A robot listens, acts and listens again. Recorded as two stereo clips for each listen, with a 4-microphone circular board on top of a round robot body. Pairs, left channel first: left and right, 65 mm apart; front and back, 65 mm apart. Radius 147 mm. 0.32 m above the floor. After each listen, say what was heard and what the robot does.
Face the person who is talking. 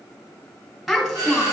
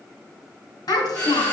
Found it: a child speaking, straight ahead.